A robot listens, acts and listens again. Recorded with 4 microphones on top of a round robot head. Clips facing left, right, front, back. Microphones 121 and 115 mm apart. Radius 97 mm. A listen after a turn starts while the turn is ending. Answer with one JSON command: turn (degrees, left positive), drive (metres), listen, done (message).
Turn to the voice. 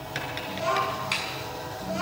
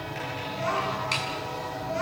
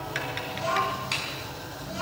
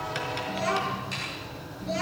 {"turn": 165}
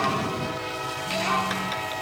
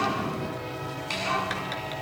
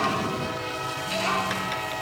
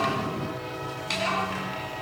{"turn": 50}
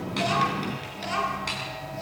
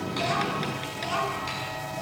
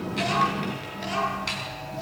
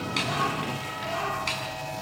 {"turn": -15}
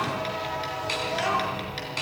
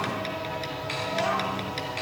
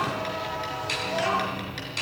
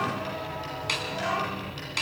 {"done": "Found it: a child speaking, straight ahead, over 4 m away."}